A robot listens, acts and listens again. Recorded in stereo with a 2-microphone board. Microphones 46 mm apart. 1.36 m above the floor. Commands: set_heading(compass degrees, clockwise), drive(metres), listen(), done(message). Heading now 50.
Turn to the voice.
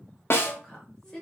set_heading(35)
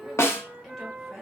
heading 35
listen()
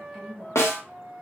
done("Facing the woman speaking, 1 to 2 m away.")